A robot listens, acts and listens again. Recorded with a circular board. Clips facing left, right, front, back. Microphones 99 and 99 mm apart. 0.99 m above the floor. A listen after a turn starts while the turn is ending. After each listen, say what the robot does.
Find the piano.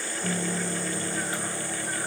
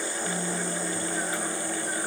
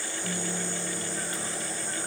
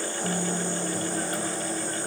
Turn 120° left.
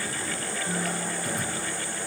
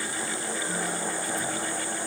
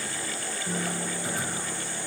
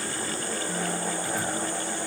Turn 30° left.
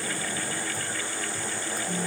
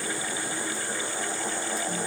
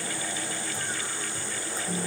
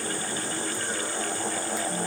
Turn 10° left.
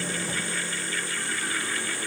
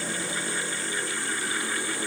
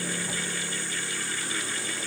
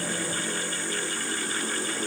Keep listening.
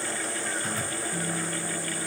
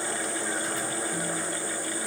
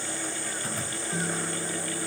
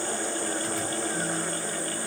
Keep listening.
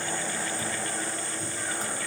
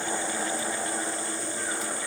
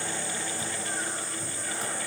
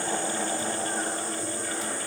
Facing where the piano came from. I can't hear it now.